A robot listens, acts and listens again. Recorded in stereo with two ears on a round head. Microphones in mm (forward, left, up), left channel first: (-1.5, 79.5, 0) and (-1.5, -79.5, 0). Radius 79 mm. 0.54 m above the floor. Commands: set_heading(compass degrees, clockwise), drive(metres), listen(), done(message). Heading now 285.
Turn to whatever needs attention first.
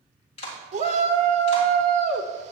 set_heading(330)
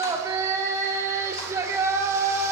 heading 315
set_heading(335)
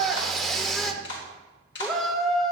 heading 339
done("Found it: a shout, straight ahead, 1 to 2 m away.")